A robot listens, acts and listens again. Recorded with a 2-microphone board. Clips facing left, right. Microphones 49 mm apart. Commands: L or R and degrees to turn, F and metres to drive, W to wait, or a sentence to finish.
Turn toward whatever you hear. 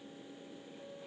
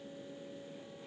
W
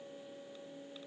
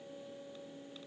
W
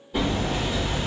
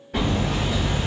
R75
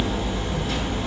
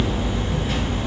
R25
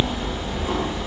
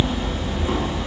Found it: hammering, straight ahead, 1 to 2 m away.